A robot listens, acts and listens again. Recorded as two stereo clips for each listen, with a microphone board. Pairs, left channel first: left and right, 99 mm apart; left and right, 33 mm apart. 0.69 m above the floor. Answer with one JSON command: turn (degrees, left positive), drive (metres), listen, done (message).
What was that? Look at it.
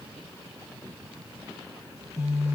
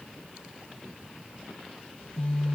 {"turn": 30}
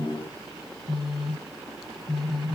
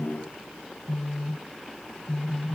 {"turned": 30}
{"done": "Facing the phone buzzing."}